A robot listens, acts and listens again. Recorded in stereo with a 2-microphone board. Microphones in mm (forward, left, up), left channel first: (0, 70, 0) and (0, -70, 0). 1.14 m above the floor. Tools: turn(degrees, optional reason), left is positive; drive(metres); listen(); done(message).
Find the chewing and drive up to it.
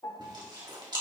turn(degrees=-35, reason="The chewing: about 35° right or 145° right.")
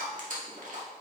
turn(degrees=-110, reason="So it is at 110° right.")
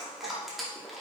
drive(metres=1.0)
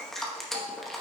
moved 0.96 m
drive(metres=1.0)
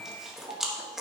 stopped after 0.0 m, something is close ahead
done("I am next to the chewing.")